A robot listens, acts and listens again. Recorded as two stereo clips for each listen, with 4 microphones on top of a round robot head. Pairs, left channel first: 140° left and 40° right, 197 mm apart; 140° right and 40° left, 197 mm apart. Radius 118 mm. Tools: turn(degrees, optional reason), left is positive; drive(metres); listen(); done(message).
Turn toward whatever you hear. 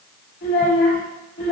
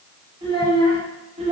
turn(degrees=95, reason="The child speaking: 95° left.")
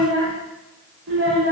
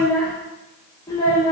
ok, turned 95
turn(degrees=-80, reason="The child speaking is now 80° right.")
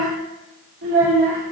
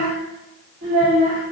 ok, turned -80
turn(degrees=-15, reason="The child speaking is now 15° right.")
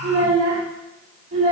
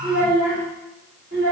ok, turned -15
done("Facing the child speaking, 2 to 4 m away.")